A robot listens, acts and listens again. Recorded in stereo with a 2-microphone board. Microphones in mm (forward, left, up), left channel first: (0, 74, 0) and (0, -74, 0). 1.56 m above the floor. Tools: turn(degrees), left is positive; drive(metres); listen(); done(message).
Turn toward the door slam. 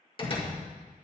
turn(degrees=35)
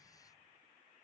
listen()
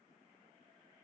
done("I heard a door slam, but can't make it out now. It was about straight ahead or 110° left.")